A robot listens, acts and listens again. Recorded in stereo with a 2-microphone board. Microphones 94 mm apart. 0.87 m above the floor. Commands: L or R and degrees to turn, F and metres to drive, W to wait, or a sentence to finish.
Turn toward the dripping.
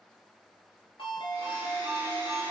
W
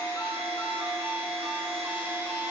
W
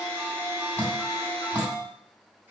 L20
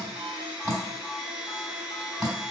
Facing the dripping.